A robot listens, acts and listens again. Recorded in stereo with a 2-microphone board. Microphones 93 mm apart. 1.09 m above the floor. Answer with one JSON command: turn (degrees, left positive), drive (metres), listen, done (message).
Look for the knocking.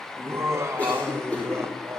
{"listen": true}
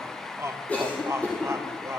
{"listen": true}
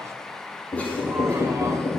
{"turn": 55}
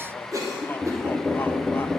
{"done": "Found it: knocking, straight ahead."}